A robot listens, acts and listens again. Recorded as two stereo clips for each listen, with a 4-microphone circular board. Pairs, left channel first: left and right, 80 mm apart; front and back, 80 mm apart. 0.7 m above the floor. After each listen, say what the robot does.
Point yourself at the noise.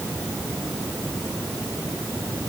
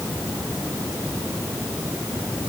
Keep listening.
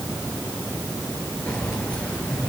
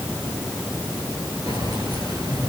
Turn 165° left.
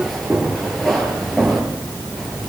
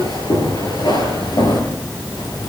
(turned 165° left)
Facing the keys jangling.